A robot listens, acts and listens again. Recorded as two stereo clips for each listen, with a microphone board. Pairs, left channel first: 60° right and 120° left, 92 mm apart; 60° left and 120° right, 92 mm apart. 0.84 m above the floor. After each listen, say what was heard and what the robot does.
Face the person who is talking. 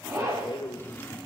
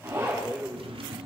The man speaking: 40° right. Turn 40° right.
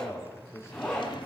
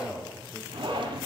Found it: a man speaking, straight ahead, 2 to 4 m away.